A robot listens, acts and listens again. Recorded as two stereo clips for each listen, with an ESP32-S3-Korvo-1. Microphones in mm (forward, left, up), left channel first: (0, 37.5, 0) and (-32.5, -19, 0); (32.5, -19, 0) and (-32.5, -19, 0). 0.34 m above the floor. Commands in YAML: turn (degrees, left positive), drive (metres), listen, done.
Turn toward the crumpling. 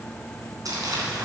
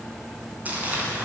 turn: -115
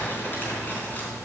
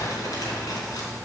done: "Found it: crumpling, straight ahead."